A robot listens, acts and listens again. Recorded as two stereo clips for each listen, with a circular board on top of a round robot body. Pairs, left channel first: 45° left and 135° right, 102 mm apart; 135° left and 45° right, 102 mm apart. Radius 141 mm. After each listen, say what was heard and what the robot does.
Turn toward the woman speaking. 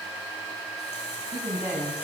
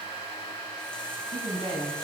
The woman speaking: 60° right. Turn 60° right.
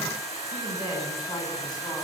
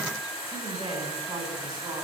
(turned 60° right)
Found it: a woman speaking, straight ahead.